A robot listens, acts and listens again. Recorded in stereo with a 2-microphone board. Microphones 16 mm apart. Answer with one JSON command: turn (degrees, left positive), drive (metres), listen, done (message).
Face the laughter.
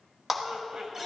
{"turn": -65}
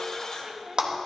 {"turn": -35}
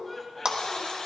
{"turn": 20}
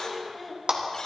{"turn": 10}
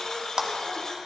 {"listen": true}
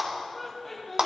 {"turn": 10}
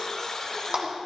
{"listen": true}
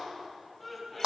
{"done": "Found it: laughter, straight ahead."}